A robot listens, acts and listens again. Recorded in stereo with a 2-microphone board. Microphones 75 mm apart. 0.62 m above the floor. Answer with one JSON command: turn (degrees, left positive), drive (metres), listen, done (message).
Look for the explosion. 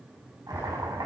{"turn": 35}
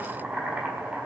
{"listen": true}
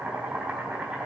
{"done": "I heard an explosion, but can't make it out now. It was about straight ahead or 110° left."}